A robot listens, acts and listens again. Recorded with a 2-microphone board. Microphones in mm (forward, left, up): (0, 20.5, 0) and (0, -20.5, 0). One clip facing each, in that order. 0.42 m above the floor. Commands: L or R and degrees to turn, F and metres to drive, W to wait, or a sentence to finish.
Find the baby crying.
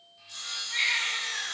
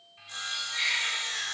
L30
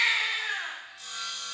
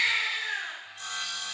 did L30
L125
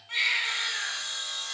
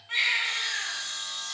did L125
Facing the baby crying.